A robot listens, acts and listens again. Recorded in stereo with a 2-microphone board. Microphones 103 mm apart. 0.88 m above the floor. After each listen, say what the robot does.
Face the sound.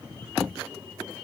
Keep listening.
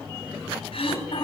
Turn 70° left.
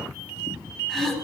Found it: throat clearing, straight ahead.